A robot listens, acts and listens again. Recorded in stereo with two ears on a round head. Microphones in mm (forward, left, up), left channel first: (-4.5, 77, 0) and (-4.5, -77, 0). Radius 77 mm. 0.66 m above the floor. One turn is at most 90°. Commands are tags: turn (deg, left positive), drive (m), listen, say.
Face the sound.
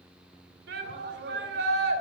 <turn deg="-70"/>
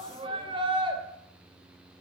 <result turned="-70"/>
<turn deg="-30"/>
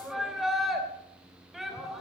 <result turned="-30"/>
<say>Found it: a shout, straight ahead, 2 to 4 m away.</say>